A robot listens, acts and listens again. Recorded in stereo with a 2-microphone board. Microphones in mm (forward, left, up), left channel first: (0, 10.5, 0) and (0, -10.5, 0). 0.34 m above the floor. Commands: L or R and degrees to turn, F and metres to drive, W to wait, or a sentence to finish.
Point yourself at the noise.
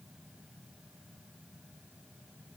W
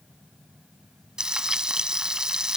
R35
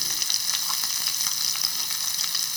Found it: frying, straight ahead.